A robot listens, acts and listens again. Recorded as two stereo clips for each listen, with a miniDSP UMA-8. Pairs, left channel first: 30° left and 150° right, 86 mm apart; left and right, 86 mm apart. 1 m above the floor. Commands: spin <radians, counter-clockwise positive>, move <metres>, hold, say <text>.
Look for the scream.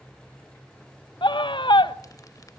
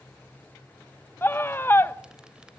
spin 0.52
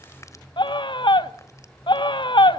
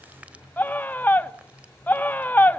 spin 0.44
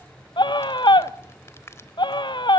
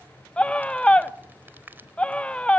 spin 0.26
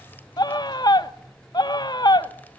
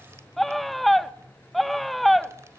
say Facing the scream.